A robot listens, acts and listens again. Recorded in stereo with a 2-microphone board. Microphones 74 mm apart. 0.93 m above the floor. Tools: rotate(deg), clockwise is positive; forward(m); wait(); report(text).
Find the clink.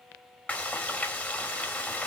wait()
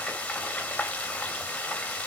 wait()
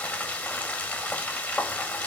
report("I can't make out a clink to turn to.")